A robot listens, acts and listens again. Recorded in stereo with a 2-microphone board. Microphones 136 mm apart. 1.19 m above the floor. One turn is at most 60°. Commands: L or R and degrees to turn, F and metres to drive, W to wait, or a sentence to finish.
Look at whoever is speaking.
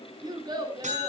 R35
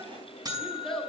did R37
Facing the child speaking, 2 to 4 m away.